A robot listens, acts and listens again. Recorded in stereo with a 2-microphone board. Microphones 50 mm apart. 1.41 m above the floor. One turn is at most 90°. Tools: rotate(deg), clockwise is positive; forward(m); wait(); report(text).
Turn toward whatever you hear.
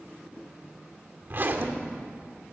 rotate(45)
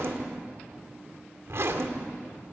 rotate(85)
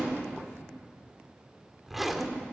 report("Found it: a zipper, straight ahead.")